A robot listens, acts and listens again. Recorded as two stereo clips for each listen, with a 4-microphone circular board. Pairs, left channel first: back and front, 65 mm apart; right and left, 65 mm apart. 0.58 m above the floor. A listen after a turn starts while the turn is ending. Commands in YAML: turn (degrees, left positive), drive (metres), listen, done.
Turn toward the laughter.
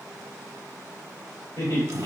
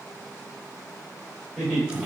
turn: 180
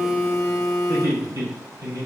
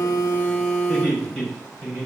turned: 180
done: "Found it: laughter, straight ahead, 2 to 4 m away."